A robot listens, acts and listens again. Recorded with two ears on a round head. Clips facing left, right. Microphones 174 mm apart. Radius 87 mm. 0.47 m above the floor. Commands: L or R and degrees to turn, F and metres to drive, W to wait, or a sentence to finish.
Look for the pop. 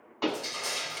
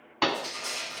R90
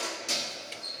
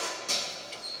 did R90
I heard a pop from this way, but can't make it out now.